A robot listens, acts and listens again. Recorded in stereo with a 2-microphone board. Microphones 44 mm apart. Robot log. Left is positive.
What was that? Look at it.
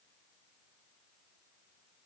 cmd idle
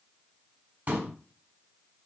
note: The pop: about 40° right or 140° right.
cmd yaw -40
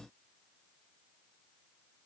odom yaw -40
cmd idle
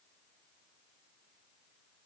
end: I heard a pop, but can't make it out now. It was about straight ahead or 100° right.